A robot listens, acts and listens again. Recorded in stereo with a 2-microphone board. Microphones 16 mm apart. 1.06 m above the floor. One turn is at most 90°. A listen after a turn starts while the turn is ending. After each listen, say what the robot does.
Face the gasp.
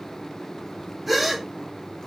Turn 30° right.
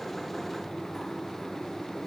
Keep listening.
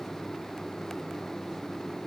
I heard a gasp, but can't make it out now. It was about 25° left or 145° right.